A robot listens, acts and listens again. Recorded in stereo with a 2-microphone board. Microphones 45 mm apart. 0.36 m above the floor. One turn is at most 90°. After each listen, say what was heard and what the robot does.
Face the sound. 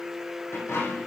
Turn 90° left.
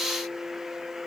Facing where the dropped coin came from. I can't hear it now.